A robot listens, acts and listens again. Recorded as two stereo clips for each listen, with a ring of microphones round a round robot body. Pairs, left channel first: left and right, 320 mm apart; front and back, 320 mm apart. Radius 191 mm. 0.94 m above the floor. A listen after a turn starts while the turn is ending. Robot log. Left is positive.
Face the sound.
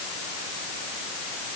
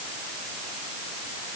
cmd idle
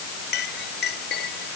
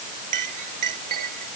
note: The clink: 155° left.
cmd yaw +155
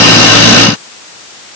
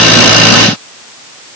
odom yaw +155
cmd idle
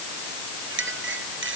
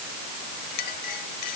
note: The clink is now 35° right.
cmd yaw -35
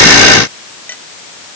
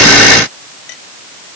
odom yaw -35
end: Found it: a clink, straight ahead.